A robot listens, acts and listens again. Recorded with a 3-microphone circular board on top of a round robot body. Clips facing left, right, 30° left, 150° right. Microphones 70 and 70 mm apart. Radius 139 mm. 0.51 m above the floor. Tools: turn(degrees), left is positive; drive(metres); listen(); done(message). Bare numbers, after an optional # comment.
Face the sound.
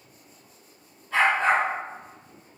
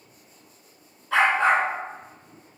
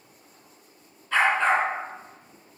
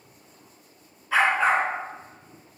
# The dog barking: 70° right.
turn(-70)
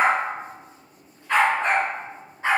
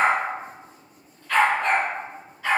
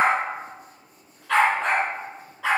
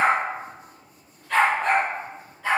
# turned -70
# The dog barking is now 25° left.
turn(25)
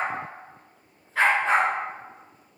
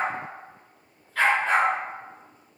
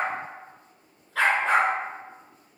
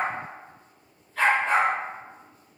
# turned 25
# The dog barking is now 20° left.
turn(20)
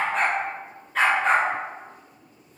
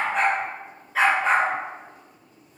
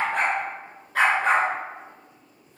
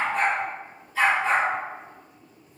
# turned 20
done("Facing the dog barking.")